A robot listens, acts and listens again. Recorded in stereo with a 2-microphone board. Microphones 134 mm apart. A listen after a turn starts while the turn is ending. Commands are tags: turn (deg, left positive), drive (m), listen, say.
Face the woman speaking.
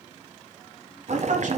<turn deg="-65"/>
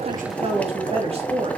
<turn deg="-50"/>
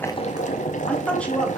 <turn deg="10"/>
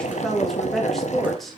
<say>Facing the woman speaking, 2 to 4 m away.</say>